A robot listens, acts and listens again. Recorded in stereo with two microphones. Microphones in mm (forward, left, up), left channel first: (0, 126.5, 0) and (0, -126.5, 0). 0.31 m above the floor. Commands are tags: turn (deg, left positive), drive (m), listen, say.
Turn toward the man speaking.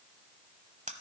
<listen/>
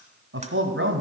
<turn deg="-50"/>
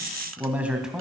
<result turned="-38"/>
<say>Found it: a man speaking, straight ahead.</say>